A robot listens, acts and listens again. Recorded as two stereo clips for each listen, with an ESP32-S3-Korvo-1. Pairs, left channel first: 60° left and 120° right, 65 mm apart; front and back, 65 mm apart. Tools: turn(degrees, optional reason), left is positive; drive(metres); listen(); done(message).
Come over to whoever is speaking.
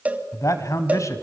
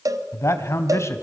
turn(degrees=35, reason="The man speaking: 35° left.")
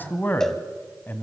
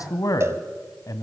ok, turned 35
drive(metres=1.0)
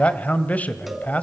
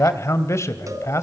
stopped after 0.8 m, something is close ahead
done("Arrived at the man speaking, straight ahead.")